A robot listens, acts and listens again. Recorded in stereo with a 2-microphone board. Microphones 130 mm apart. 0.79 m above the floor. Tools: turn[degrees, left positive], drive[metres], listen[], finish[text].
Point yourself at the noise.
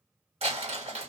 Thought: The crumpling: about 55° right or 125° right.
Action: turn[-55]
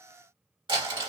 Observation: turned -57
Thought: So it is at 50° right.
Action: turn[-50]
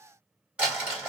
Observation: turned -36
Thought: The crumpling is now 10° right.
Action: turn[-10]
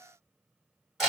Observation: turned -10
Action: finish[Found it: crumpling, straight ahead, 1 to 2 m away.]